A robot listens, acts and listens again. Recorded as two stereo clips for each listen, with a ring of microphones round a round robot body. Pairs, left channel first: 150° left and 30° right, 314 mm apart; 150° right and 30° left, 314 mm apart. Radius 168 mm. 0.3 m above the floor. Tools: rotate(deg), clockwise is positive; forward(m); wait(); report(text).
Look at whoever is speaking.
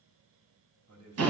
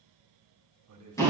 report("Found it: a man speaking, straight ahead.")